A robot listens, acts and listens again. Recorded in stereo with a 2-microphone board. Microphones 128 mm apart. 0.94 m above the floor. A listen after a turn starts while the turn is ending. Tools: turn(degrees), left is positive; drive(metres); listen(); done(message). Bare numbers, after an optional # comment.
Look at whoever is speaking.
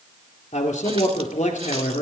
turn(90)
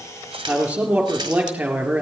# So it is at 10° right.
turn(-10)
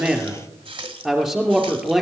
done("Found it: a man speaking, straight ahead.")